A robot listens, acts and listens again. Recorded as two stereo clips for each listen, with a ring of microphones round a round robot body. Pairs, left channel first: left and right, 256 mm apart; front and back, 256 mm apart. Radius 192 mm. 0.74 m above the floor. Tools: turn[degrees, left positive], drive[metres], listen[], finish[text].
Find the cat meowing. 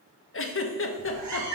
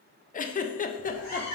Thought: The cat meowing: 125° right.
Action: turn[-125]
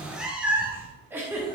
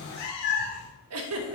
Thought: The cat meowing is now 10° right.
Action: turn[-10]
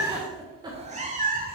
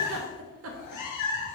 Thought: The cat meowing is now 35° right.
Action: turn[-35]
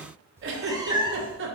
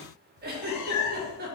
Thought: The cat meowing is now 15° right.
Action: turn[-15]
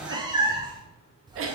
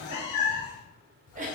Thought: The cat meowing is now 15° right.
Action: turn[-15]
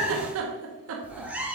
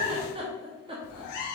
Action: finish[Found it: a cat meowing, straight ahead.]